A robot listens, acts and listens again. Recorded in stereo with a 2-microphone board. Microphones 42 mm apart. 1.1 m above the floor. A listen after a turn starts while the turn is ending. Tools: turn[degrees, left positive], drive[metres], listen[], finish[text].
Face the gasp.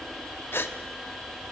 Thought: The gasp: about 75° left or 105° left.
Action: turn[75]
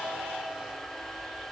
Action: listen[]
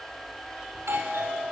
Action: finish[I heard a gasp, but can't make it out now. It was about straight ahead or 30° left.]